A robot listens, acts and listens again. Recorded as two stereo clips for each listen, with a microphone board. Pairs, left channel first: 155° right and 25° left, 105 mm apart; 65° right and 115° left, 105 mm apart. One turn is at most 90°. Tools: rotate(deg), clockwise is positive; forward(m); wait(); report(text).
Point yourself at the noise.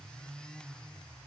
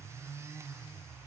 wait()
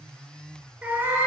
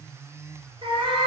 rotate(-85)
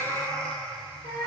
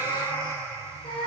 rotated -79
rotate(40)
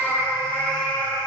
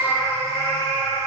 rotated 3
rotate(50)
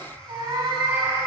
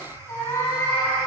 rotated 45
rotate(10)
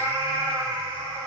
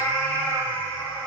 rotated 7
report("Found it: a cat meowing, straight ahead, 2 to 4 m away.")